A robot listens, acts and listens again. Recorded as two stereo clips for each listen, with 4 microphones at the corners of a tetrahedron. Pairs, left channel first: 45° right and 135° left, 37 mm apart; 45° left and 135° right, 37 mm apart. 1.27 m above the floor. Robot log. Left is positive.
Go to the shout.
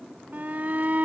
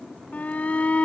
note: The shout: 90° left.
cmd yaw +90
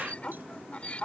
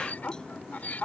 cmd fwd 1.0
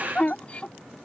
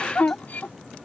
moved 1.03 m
note: The shout is now 10° left.
cmd yaw +10
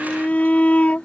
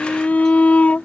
cmd fwd 1.0
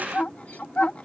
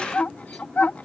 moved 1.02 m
cmd fwd 1.0
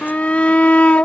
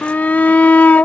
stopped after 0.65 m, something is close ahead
end: I am next to the shout.